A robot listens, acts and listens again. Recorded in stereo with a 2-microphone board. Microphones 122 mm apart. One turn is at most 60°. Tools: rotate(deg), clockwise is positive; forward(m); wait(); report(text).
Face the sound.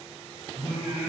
rotate(60)
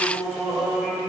report("Found it: singing, straight ahead, 2 to 4 m away.")